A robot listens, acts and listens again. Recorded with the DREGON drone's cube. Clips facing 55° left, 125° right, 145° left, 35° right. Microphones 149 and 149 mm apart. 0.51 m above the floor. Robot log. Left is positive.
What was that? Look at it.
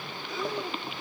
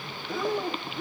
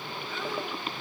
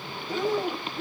note: The breathing: 85° right.
cmd yaw -85
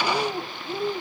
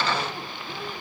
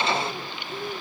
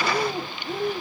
note: The breathing is now 10° right.
cmd yaw -10
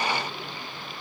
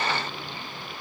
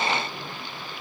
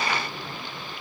cmd idle
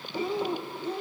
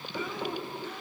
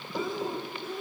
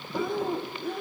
end: Facing the breathing.